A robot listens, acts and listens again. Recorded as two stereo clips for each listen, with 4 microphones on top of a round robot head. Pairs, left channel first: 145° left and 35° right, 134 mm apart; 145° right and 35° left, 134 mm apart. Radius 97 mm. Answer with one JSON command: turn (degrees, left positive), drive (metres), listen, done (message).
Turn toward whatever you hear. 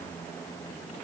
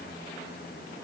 {"listen": true}
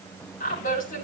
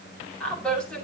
{"turn": 130}
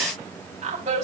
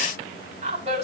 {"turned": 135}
{"done": "Found it: a woman speaking, straight ahead, over 4 m away."}